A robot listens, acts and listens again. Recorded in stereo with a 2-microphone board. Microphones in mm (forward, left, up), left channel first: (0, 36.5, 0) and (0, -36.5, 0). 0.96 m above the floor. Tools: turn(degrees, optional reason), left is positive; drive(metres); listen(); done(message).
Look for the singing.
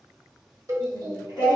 turn(degrees=-60, reason="The singing: about 60° right or 120° right.")
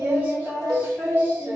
turn(degrees=-25, reason="So it is at 25° right.")
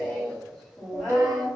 done("Found it: singing, straight ahead.")